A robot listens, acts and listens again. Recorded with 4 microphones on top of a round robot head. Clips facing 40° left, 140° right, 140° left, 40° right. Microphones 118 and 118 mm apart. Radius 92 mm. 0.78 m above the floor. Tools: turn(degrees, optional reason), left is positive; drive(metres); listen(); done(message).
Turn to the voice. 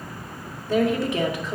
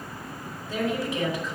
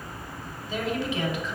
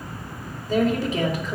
turn(degrees=10, reason="The woman speaking: 10° left.")
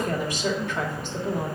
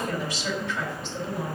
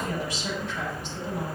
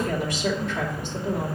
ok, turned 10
done("Found it: a woman speaking, straight ahead, 2 to 4 m away.")